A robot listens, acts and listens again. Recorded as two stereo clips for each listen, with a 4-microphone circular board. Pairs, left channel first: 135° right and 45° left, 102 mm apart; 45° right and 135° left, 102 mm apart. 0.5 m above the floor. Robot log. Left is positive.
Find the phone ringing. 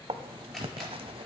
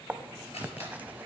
cmd idle
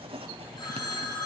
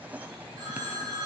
note: The phone ringing: straight behind.
cmd yaw +180
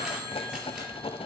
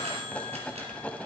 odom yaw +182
cmd idle
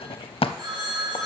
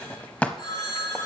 end: Facing the phone ringing.